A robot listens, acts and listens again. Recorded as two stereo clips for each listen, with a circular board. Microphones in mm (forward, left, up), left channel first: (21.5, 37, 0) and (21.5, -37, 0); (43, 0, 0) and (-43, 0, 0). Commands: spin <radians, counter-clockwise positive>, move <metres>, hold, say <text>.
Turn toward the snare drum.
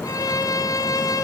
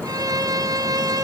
hold
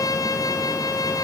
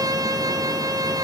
hold
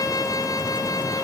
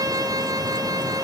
say I can't make out a snare drum to turn to.